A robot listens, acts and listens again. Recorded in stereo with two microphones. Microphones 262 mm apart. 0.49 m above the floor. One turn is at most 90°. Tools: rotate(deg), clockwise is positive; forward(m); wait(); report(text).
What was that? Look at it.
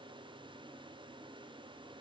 wait()
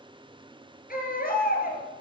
rotate(-35)
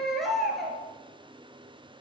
report("Found it: a baby crying, straight ahead, 2 to 4 m away.")